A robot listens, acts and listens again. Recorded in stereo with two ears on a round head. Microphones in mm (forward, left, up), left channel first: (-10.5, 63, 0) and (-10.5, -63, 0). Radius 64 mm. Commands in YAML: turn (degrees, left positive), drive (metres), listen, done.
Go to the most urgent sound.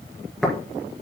listen: true
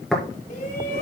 turn: 50
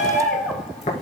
drive: 1.0
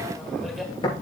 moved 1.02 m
listen: true
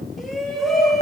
drive: 1.0
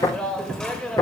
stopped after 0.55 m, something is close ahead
done: "I am next to the shout."